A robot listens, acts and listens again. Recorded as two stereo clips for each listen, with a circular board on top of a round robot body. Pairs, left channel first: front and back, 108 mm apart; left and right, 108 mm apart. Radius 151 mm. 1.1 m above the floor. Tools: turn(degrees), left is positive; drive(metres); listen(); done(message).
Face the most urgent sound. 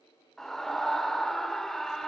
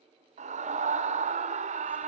turn(degrees=-85)
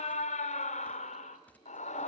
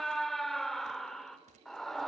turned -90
done("Facing the scream, 2 to 4 m away.")